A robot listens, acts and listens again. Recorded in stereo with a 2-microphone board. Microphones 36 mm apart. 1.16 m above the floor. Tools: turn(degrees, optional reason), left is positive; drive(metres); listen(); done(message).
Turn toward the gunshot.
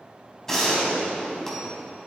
turn(degrees=30)
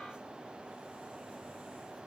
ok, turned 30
listen()
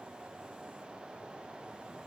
done("I heard a gunshot, but can't make it out now. It was about 20° right or 140° left.")